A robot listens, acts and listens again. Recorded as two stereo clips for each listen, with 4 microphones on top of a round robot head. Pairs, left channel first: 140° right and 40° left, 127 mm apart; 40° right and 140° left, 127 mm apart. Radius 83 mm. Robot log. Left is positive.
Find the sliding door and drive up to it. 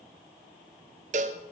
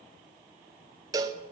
cmd idle
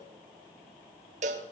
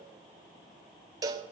cmd idle
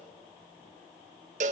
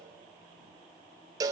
end: I can't make out a sliding door, only a cowbell.